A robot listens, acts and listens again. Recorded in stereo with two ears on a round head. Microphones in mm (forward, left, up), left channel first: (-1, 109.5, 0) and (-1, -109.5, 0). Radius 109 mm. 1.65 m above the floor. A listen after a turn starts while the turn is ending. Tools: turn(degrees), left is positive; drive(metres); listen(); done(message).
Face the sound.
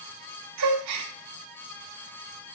turn(degrees=-90)
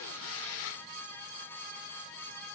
done("Facing where the gasp came from. I can't hear it now.")